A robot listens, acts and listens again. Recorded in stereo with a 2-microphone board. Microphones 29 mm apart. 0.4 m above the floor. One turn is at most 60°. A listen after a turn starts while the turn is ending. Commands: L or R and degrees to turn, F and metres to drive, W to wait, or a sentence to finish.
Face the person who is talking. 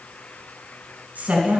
R60
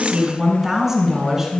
R20
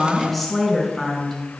Facing the woman speaking.